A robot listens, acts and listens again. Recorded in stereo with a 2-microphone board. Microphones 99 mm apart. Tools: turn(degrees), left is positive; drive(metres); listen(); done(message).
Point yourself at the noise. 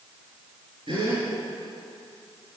turn(degrees=-60)
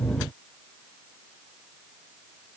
listen()
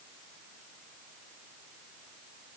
done("I heard a gasp, but can't make it out now. It was about straight ahead or 60° right.")